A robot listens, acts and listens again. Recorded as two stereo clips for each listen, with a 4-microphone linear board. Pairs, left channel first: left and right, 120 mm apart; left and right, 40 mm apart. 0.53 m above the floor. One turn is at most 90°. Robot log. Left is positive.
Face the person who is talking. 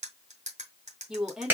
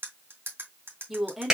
cmd yaw -30
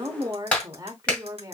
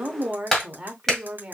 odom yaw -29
note: So it is at 145° right.
cmd yaw -90
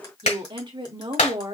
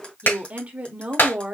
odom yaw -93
note: The woman speaking is now 50° right.
cmd yaw -50
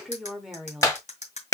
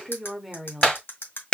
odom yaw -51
end: Facing the woman speaking, 1 to 2 m away.